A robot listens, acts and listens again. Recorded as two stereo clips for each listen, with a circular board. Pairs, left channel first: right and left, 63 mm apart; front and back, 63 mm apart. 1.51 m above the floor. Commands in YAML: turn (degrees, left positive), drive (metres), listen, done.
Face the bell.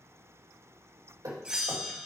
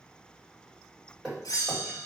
turn: 15
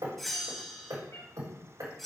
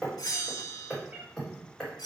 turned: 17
done: "Found it: a bell, straight ahead."